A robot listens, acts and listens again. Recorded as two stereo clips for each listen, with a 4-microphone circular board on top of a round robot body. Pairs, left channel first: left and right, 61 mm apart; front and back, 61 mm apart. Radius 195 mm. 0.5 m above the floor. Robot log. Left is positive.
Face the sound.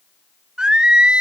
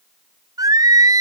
note: The singing: 165° right.
cmd yaw -165
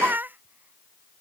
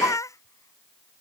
note: The singing is now 30° right.
cmd yaw -30
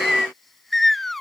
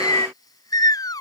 end: Facing the singing.